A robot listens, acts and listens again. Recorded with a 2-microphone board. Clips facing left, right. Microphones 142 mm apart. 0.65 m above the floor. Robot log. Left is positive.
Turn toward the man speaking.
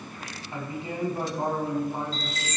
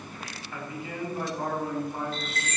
note: The man speaking: about 20° left or 160° left.
cmd yaw +20
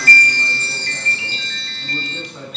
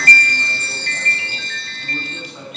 note: So it is at 10° right.
cmd yaw -10
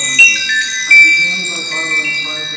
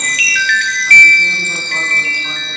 cmd idle
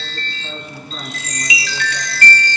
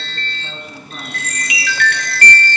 end: Facing the man speaking, over 4 m away.